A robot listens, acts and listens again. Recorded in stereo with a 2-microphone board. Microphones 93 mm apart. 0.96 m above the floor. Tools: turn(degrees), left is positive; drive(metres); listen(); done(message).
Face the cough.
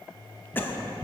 turn(degrees=20)
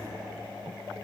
listen()
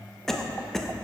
done("Facing the cough, under 1 m away.")